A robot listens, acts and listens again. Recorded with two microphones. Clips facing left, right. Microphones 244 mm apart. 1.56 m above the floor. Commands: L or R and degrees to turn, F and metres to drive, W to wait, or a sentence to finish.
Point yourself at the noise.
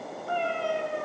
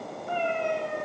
R20
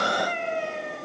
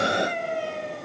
R35
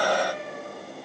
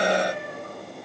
R120
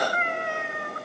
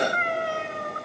R35
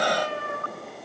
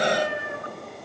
R20
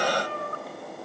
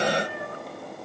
R15
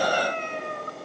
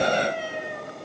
Facing the cat meowing.